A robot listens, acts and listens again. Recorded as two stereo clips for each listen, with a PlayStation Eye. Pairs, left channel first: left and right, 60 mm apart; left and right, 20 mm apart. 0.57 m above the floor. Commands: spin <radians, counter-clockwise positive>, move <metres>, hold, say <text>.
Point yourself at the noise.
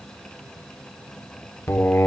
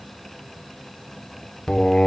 spin 0.70
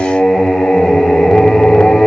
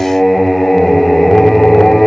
say Found it: singing, straight ahead, under 1 m away.